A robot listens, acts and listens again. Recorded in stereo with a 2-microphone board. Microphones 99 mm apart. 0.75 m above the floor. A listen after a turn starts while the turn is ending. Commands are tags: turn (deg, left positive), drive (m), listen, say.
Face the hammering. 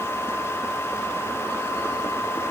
<listen/>
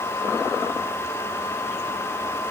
<listen/>
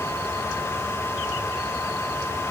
<say>I can't make out hammering to turn to.</say>